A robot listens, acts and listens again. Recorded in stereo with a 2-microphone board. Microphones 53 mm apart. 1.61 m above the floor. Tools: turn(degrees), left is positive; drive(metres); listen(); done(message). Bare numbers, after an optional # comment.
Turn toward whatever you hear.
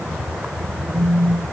# The phone buzzing: about 50° right or 130° right.
turn(-50)
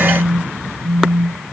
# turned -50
# So it is at 80° right.
turn(-80)
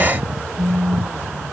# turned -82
done("Facing the phone buzzing, 1 to 2 m away.")